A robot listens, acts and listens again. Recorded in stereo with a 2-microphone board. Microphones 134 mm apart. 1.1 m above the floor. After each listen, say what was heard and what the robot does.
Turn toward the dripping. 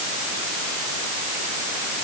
Keep listening.
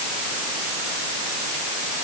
Keep listening.
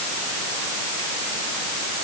I can't make out dripping.